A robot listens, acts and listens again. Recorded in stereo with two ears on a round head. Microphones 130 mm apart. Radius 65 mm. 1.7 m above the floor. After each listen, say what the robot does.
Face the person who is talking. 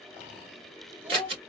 Turn 30° right.
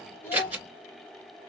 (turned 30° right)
Turn 20° left.
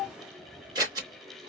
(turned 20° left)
Found it: a child speaking, straight ahead, 1 to 2 m away.